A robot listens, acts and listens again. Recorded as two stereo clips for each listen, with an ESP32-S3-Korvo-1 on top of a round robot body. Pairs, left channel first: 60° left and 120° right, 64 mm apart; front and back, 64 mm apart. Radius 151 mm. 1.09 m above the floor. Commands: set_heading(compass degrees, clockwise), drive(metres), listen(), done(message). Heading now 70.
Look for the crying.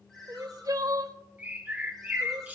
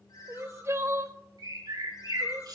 set_heading(205)
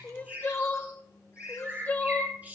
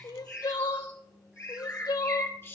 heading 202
done("Found it: crying, straight ahead.")